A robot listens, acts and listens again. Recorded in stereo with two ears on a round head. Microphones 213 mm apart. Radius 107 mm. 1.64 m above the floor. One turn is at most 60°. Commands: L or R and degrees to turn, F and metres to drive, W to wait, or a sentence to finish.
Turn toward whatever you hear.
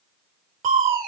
R35
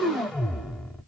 Found it: crushing, straight ahead.